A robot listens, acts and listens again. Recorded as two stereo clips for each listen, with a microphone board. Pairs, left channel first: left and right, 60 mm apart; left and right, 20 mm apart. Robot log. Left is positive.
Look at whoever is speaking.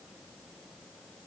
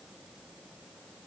cmd idle
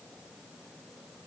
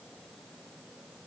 cmd idle
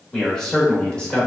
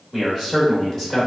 note: The man speaking: about 15° left or 165° left.
cmd yaw +15
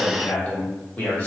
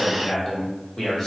note: The man speaking: about 30° left or 150° left.
cmd yaw +30
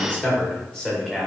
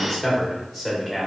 cmd yaw +30
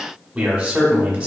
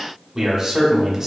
note: So it is at 15° right.
cmd yaw -15
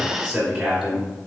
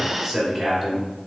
end: Facing the man speaking, 1 to 2 m away.